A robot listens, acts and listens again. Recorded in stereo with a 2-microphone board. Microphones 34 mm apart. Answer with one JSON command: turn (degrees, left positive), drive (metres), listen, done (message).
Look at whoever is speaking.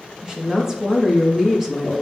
{"turn": -30}
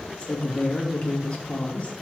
{"turn": 40}
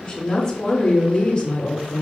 {"turn": 25}
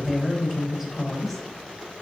{"turn": -10}
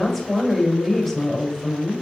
{"done": "Facing the woman speaking."}